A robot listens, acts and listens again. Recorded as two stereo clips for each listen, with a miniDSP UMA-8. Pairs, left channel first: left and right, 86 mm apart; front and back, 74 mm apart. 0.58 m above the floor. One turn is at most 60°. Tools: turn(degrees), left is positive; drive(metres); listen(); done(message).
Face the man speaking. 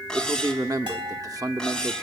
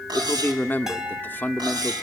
turn(degrees=-60)
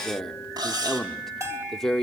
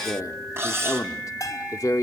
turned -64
done("Facing the man speaking, 1 to 2 m away.")